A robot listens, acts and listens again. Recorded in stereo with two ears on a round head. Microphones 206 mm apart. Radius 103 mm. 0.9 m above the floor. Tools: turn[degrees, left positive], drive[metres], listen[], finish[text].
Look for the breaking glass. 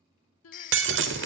Thought: The breaking glass: about 55° right or 125° right.
Action: turn[-55]
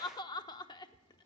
Action: listen[]
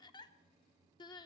Action: finish[I heard breaking glass, but can't make it out now. It was about straight ahead or 70° right.]